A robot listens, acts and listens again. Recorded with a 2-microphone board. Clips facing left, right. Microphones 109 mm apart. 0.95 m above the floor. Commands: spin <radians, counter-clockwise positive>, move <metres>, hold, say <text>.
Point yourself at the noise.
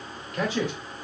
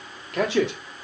spin -1.31
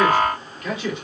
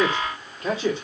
spin -0.52
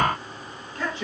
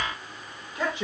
spin -0.26
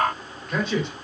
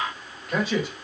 say Found it: a man speaking, straight ahead.